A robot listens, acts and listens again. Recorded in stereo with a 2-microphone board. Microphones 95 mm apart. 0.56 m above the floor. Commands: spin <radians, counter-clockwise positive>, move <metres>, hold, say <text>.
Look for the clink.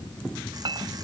spin -1.13
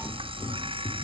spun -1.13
hold
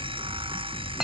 say Facing the clink.